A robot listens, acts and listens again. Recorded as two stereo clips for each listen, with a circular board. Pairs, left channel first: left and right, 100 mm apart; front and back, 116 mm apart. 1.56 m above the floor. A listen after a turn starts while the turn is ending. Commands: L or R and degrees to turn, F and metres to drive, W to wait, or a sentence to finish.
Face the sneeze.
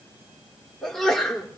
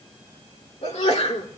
Facing the sneeze, 2 to 4 m away.